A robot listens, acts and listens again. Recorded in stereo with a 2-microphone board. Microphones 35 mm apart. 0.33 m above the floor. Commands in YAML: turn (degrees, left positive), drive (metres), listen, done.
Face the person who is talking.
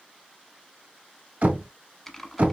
listen: true
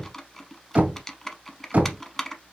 listen: true
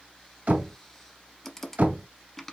done: "I can't make out anyone speaking, only typing on a keyboard and knocking."